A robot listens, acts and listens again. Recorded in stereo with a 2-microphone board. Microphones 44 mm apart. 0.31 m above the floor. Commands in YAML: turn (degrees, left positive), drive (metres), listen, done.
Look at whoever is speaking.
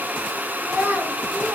turn: -45
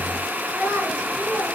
turn: -85
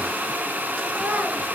listen: true
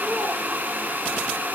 listen: true
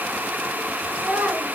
turn: -35
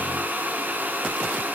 listen: true
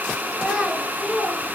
turn: -15
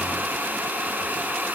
listen: true
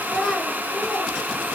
done: "Found it: a child speaking, straight ahead."